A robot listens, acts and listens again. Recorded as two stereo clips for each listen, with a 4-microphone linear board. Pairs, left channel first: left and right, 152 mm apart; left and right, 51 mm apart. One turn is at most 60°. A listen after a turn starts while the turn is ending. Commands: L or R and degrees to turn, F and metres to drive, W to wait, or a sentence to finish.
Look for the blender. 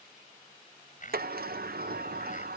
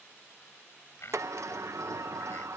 L60
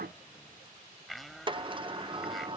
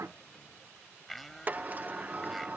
Found it: a blender, straight ahead.